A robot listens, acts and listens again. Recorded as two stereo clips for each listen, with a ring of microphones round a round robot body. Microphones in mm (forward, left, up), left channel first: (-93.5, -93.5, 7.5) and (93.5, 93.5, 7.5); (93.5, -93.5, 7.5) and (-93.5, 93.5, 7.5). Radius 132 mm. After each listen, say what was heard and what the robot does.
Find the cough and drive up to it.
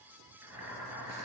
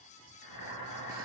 Keep listening.
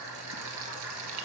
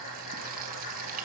Keep listening.
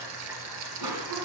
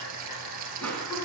The cough: 40° left. Turn 40° left.
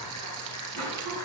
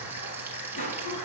The cough is now 15° left. Turn 15° left.
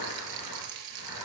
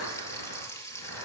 Keep listening.
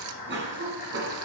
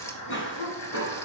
Drive 1.0 m forward.
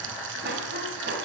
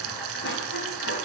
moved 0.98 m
Drive 1.0 m forward.
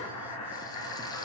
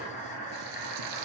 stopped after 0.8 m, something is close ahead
Keep listening.
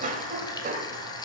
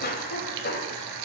I am next to the cough.